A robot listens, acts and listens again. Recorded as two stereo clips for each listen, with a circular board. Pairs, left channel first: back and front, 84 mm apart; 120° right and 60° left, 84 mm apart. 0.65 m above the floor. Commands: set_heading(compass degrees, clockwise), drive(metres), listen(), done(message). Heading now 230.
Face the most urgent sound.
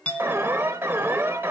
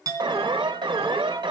set_heading(170)
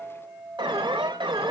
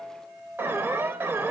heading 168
done("Found it: an alarm, straight ahead.")